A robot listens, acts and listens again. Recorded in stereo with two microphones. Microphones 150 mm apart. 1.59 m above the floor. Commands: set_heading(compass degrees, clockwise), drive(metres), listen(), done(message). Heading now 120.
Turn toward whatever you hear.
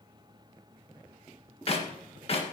set_heading(80)
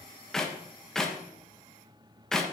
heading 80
done("Facing the clap, 1 to 2 m away.")